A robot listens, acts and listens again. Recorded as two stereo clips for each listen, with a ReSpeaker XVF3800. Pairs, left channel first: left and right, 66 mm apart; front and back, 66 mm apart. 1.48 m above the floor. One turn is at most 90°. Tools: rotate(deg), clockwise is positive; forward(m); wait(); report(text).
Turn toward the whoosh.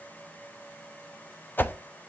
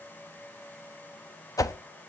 rotate(-30)
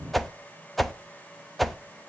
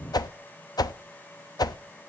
report("Facing the whoosh.")